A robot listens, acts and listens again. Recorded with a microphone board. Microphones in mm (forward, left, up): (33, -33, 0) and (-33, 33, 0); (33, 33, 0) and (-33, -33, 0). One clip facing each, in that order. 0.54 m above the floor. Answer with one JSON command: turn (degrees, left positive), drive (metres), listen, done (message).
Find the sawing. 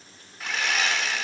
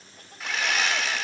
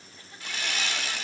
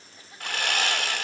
{"turn": -135}
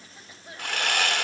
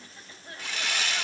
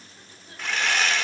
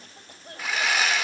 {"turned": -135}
{"turn": -50}
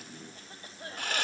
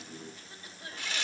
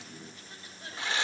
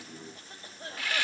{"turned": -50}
{"turn": -20}
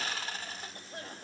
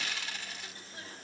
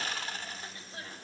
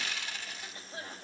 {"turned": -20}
{"done": "Found it: sawing, straight ahead, 1 to 2 m away."}